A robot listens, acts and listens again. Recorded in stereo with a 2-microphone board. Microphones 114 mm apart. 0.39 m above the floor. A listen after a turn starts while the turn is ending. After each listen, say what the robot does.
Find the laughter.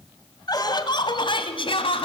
Turn 50° left.
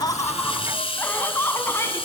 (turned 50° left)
Turn 20° left.
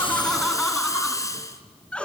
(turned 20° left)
Turn 10° left.
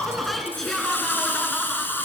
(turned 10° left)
Found it: laughter, straight ahead, over 4 m away.